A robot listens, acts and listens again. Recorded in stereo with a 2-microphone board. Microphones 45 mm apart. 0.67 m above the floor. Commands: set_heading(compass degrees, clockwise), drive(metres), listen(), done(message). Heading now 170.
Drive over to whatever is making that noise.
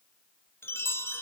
set_heading(100)
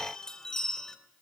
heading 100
set_heading(85)
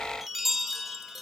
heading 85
drive(1.0)
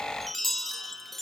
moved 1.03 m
drive(1.0)
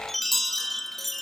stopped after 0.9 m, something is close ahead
done("I am next to the chime.")